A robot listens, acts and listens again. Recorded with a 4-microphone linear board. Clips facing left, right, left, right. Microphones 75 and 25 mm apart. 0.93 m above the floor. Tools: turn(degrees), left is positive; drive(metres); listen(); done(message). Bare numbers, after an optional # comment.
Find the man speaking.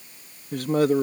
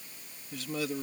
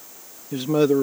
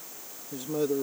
# The man speaking: about 55° left or 125° left.
turn(55)
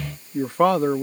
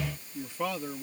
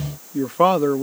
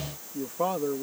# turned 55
# So it is at 65° left.
turn(65)
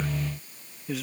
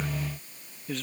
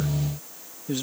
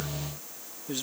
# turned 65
done("Found it: a man speaking, straight ahead.")